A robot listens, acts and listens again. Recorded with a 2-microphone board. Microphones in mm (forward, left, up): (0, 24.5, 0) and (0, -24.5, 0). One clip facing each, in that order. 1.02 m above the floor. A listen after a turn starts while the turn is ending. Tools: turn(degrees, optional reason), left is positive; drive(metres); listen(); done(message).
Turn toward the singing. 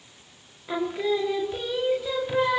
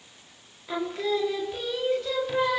turn(degrees=30)
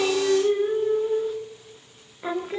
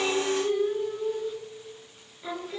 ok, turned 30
turn(degrees=140, reason="So it is at 140° left.")
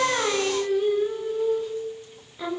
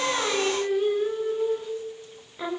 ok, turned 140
turn(degrees=-15, reason="The singing is now 15° right.")
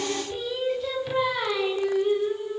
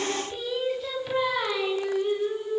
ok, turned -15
done("Facing the singing, 1 to 2 m away.")